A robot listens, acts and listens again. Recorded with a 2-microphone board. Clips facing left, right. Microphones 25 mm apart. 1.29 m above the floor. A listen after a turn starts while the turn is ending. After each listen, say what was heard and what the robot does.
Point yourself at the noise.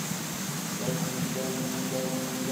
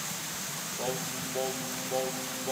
The singing: about 70° right or 110° right. Turn 70° right.
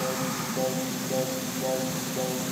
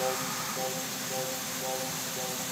Found it: singing, straight ahead, under 1 m away.